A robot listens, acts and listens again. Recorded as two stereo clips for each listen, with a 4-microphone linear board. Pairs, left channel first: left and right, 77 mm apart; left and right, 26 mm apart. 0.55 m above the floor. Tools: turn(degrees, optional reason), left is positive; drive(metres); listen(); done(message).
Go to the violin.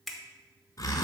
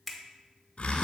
listen()
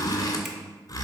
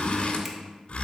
listen()
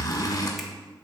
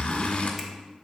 done("I can't make out a violin, only a finger snap and a zipper.")